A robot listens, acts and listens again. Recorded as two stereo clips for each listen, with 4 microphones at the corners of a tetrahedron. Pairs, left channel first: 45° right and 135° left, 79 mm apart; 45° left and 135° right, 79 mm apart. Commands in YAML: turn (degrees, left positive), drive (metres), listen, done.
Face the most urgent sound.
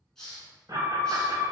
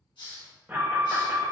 turn: 165
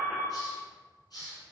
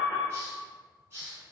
turn: 45
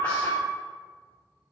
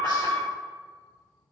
done: "Found it: an alarm, straight ahead."